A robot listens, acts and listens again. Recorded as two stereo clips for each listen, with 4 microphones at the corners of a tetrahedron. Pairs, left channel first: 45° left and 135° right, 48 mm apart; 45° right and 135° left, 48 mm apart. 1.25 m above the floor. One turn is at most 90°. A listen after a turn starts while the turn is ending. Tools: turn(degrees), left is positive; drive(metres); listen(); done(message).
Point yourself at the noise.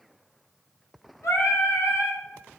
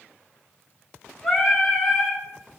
turn(degrees=50)
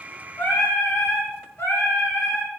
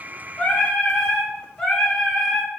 turn(degrees=35)
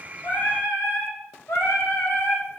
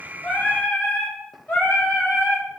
turn(degrees=20)
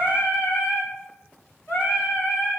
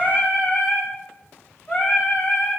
done("Facing the singing, 2 to 4 m away.")